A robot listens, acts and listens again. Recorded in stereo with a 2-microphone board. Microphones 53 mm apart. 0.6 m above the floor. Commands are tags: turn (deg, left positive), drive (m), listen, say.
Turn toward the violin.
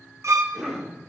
<turn deg="-60"/>
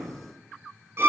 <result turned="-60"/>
<turn deg="-50"/>
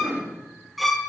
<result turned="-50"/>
<say>Facing the violin.</say>